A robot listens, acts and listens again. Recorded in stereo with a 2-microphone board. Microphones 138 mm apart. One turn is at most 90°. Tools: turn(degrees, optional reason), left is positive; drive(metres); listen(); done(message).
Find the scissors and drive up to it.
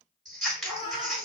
turn(degrees=30)
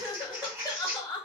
turn(degrees=-25, reason="So it is at 25° right.")
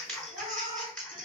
turn(degrees=10, reason="The scissors is now 10° left.")
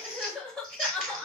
drive(metres=1.0)
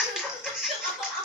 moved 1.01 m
drive(metres=1.0)
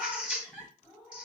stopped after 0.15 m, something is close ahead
turn(degrees=-10, reason="The scissors is now 10° right.")
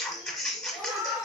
done("I am next to the scissors.")